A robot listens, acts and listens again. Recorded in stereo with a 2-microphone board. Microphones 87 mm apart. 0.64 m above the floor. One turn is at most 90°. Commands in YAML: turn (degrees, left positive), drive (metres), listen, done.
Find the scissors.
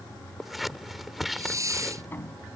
turn: 30
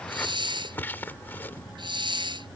turn: 90
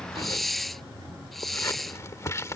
turn: 40
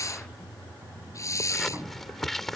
done: "Facing the scissors."